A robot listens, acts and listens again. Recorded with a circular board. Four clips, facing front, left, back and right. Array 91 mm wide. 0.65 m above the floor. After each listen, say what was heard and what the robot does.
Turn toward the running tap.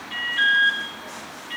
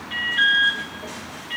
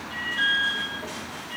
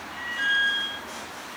Keep listening.
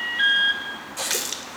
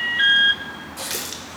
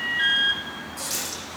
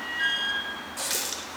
Found it: a running tap, straight ahead.